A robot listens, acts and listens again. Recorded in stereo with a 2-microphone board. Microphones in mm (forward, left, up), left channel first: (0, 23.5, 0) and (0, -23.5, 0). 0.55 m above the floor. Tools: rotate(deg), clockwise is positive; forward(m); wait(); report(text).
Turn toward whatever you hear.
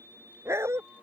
rotate(70)
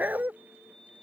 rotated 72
rotate(40)
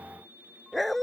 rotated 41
report("Found it: a dog barking, straight ahead.")